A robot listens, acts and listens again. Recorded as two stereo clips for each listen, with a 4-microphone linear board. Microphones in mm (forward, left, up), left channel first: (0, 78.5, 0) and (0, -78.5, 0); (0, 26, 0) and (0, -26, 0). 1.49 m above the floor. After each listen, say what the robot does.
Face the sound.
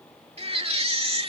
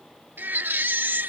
Turn 40° right.
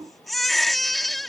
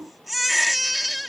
Facing the baby crying.